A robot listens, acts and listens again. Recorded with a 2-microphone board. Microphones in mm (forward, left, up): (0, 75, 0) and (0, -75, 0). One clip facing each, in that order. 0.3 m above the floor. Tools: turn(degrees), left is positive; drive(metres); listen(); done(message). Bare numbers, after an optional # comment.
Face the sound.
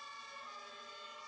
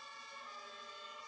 listen()
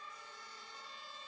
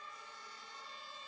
listen()
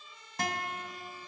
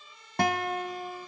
# The guitar: about 60° right or 120° right.
turn(-60)
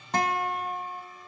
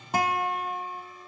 # So it is at 10° right.
turn(-10)
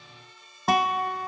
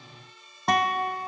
done("Facing the guitar.")